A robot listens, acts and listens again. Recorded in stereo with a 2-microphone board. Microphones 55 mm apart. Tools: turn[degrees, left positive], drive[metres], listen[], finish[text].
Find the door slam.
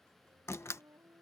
Thought: The door slam: about 55° left or 125° left.
Action: turn[55]
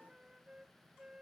Action: listen[]
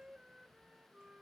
Action: finish[I heard a door slam, but can't make it out now. It was about straight ahead or 70° left.]